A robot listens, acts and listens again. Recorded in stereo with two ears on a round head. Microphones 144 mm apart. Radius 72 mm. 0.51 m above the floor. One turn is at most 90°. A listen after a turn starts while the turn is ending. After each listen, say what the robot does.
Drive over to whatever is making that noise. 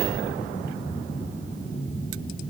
Keep listening.
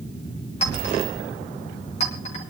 Turn 45° left.
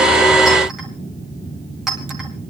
Drive 1.0 m forward.
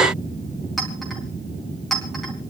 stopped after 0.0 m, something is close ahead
Blocked. The clink is further on, straight ahead.